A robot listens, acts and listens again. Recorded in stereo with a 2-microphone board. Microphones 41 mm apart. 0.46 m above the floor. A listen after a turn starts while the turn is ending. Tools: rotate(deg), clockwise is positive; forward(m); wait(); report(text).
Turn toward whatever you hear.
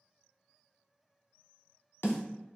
rotate(-75)
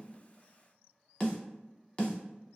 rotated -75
rotate(-30)
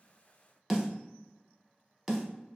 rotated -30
report("Facing the snare drum.")